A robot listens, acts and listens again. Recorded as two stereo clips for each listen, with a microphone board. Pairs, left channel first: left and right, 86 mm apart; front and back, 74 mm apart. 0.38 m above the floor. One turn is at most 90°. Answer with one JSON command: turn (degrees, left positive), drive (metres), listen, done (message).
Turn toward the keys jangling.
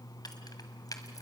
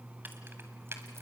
{"turn": 90}
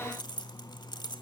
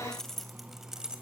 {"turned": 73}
{"turn": 90}
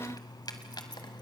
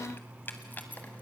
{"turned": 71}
{"turn": 65}
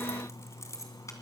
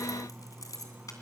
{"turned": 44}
{"turn": 40}
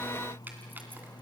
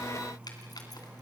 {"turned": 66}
{"turn": -25}
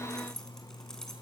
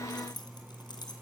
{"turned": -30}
{"done": "Facing the keys jangling."}